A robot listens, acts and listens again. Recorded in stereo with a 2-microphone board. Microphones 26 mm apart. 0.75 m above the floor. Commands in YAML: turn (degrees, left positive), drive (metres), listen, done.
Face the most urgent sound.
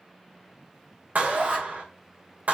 turn: -50
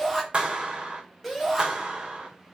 done: "Found it: a shout, straight ahead, over 4 m away."